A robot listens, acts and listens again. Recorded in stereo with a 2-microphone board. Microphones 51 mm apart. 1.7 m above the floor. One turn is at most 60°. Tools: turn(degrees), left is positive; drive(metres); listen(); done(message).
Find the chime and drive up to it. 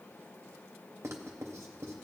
listen()
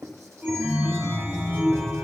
turn(degrees=-25)
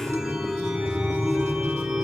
drive(metres=1.0)
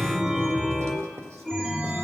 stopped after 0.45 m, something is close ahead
done("Something is in my way. I am facing the chime but have not reached it.")